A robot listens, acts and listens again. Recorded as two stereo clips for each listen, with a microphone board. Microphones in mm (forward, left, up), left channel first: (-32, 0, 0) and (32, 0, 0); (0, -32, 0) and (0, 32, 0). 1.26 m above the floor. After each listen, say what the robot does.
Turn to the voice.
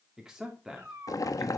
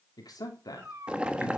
Turn 80° right.
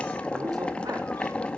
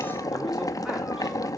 Keep listening.
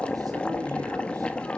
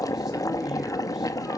Keep listening.
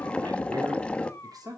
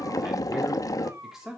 Found it: a man speaking, straight ahead, 2 to 4 m away.